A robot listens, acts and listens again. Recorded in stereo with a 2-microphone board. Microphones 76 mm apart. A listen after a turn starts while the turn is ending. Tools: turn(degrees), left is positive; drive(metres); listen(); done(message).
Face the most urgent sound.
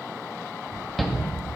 turn(degrees=30)
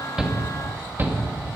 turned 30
turn(degrees=-30)
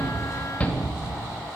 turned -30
turn(degrees=20)
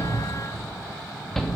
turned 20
done("Found it: a shout, straight ahead.")